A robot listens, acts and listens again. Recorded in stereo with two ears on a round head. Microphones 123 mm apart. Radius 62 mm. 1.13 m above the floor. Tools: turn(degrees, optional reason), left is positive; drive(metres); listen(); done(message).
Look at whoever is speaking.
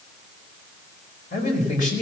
turn(degrees=65, reason="The man speaking: about 65° left or 115° left.")
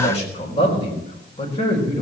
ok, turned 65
turn(degrees=40, reason="So it is at 40° left.")
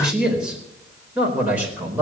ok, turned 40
turn(degrees=-10, reason="The man speaking is now 10° right.")
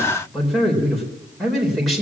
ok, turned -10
done("Facing the man speaking.")